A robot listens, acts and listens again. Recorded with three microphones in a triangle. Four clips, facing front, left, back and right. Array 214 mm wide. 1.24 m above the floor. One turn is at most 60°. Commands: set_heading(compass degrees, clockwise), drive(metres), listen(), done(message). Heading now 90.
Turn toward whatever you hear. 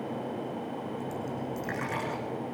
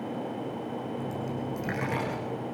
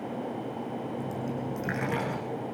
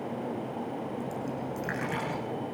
set_heading(30)
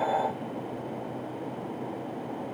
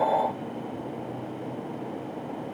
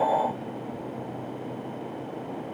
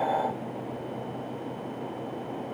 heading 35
set_heading(335)
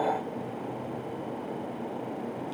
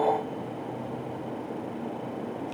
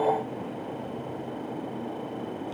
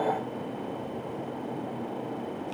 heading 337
set_heading(312)
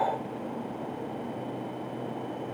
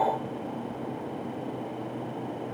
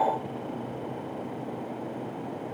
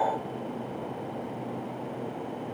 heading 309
done("Facing where the dropped coin came from. I can't hear it now.")